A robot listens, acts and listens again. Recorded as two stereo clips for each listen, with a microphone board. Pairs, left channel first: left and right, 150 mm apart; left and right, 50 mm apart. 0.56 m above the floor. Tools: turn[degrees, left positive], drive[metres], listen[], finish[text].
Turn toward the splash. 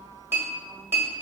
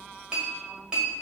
Action: listen[]
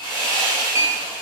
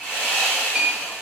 Action: listen[]
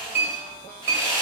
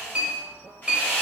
Action: finish[I can't make out a splash to turn to.]